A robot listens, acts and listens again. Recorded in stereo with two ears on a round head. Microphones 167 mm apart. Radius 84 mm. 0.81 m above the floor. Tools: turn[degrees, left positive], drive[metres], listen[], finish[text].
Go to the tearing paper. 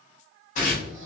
Thought: The tearing paper: about 40° left or 140° left.
Action: turn[40]
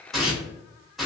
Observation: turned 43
Action: drive[1.0]
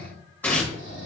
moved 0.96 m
Thought: The tearing paper is now 10° left.
Action: turn[10]
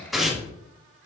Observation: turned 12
Action: drive[1.0]
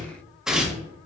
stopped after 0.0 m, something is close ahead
Action: finish[I am next to the tearing paper.]